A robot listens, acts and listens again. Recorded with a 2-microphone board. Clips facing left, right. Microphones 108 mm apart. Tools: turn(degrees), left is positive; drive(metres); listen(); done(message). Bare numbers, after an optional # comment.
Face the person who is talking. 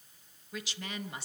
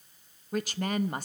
# The woman speaking: about 50° right or 130° right.
turn(-50)
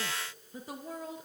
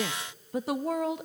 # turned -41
# So it is at 90° right.
turn(-90)
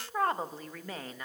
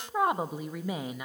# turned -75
# The woman speaking is now 15° right.
turn(-15)
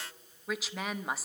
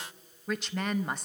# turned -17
done("Found it: a woman speaking, straight ahead.")